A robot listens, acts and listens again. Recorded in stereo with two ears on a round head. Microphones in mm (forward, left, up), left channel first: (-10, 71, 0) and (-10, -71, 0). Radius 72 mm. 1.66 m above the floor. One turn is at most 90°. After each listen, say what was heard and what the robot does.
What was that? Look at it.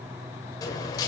The dropped coin: about 25° left or 155° left. Turn 25° left.
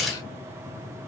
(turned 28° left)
Facing the dropped coin.